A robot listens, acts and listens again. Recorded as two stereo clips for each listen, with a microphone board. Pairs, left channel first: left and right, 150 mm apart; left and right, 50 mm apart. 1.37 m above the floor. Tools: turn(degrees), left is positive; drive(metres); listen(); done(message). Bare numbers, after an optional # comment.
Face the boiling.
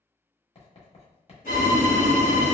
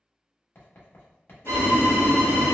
# The boiling: about 60° left or 120° left.
turn(60)
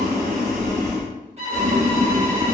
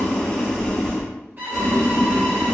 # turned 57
# So it is at 10° left.
turn(10)
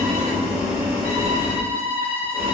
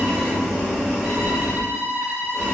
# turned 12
done("Facing the boiling, 1 to 2 m away.")